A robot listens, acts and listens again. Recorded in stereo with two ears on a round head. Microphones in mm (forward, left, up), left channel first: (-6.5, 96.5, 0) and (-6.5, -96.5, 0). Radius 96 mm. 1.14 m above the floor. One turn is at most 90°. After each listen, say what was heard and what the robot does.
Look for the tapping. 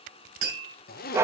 The tapping: about 50° right or 130° right. Turn 50° right.
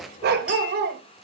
Keep listening.
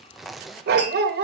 Keep listening.
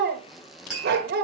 Facing the tapping, over 4 m away.